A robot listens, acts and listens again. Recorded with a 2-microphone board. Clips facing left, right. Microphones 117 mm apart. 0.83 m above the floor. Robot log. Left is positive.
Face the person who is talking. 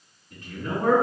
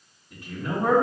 cmd yaw -30
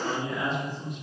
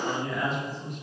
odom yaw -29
note: So it is at 20° left.
cmd yaw +20
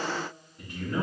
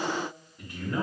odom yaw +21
end: Facing the man speaking, 1 to 2 m away.